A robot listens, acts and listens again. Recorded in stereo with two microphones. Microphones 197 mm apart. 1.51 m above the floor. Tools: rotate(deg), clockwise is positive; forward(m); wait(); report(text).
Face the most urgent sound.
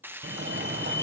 rotate(70)
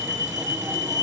rotate(15)
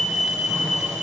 report("Found it: a fire alarm, straight ahead.")